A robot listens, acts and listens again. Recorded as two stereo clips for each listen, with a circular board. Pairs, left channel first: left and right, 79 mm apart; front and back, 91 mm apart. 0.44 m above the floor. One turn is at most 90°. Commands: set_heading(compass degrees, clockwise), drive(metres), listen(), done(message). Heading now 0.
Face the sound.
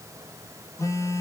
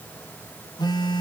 set_heading(320)
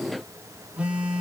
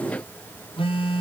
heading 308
set_heading(318)
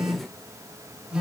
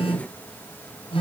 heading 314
done("Facing the phone buzzing.")